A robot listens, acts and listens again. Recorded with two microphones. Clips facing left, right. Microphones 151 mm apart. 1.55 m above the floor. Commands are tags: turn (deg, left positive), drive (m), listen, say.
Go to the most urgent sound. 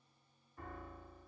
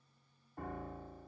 <listen/>
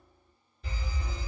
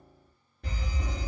<turn deg="-60"/>
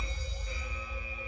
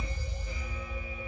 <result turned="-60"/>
<drive m="1.0"/>
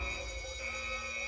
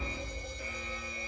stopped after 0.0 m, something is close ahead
<say>Something is in my way. I am facing the fire alarm but have not reached it.</say>